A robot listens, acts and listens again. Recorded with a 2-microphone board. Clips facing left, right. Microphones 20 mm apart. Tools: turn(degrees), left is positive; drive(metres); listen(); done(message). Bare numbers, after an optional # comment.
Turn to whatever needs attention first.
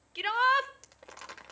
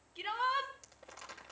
# The shout: about 65° left or 115° left.
turn(65)
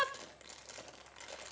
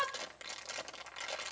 # So it is at 25° left.
turn(25)
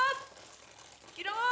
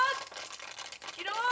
done("Found it: a shout, straight ahead.")